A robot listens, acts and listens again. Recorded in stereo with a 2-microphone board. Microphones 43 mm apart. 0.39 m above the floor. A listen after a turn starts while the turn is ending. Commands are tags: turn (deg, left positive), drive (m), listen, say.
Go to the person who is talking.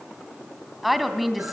<turn deg="30"/>
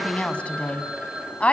<turn deg="150"/>
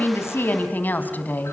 <turn deg="45"/>
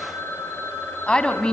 <turn deg="20"/>
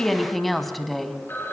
<drive m="1.0"/>
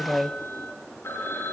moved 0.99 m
<drive m="1.0"/>
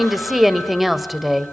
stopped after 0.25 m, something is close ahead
<say>I am next to the woman speaking.</say>